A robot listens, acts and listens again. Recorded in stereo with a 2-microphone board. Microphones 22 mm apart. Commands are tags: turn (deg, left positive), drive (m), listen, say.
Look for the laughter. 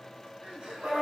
<turn deg="-90"/>
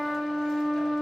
<listen/>
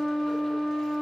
<listen/>
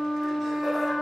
<say>I heard laughter from this way, but can't make it out now.</say>